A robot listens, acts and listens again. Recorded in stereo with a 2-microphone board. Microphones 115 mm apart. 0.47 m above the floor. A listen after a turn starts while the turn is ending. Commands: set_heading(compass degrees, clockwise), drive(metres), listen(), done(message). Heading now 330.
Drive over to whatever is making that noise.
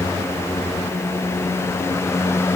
listen()
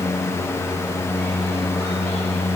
listen()
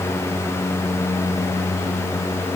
done("I can't make out anything.")